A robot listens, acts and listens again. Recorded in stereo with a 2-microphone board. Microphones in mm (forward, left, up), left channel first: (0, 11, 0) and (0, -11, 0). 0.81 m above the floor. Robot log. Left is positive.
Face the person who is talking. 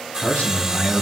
cmd yaw +90
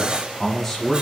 note: So it is at 10° left.
cmd yaw +10
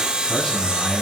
end: Found it: a man speaking, straight ahead, over 4 m away.